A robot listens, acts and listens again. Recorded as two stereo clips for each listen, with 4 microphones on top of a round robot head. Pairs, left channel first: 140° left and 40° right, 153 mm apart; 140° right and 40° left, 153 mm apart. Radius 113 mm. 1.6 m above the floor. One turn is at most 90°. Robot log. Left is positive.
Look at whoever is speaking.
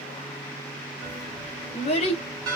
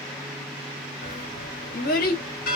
note: The child speaking: 170° right.
cmd yaw -90
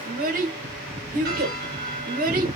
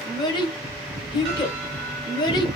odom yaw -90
note: The child speaking is now 75° right.
cmd yaw -75
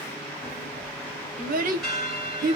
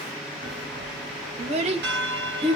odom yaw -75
note: The child speaking is now 10° right.
cmd yaw -10
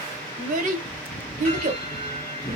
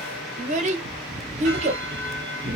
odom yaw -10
end: Found it: a child speaking, straight ahead.